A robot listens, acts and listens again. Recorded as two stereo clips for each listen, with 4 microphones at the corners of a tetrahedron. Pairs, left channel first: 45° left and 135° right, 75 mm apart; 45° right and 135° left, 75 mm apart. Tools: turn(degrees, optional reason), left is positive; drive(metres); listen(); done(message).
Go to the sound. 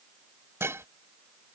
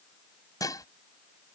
turn(degrees=-80, reason="The dishes clattering: 80° right.")
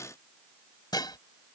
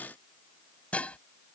turn(degrees=25, reason="The dishes clattering is now 25° left.")
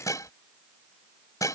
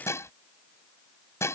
drive(metres=1.0)
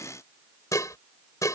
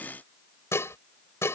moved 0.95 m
drive(metres=1.0)
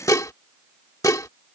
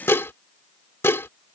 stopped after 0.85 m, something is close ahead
turn(degrees=10, reason="The dishes clattering is now 10° left.")
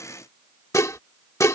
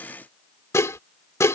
done("I am next to the dishes clattering.")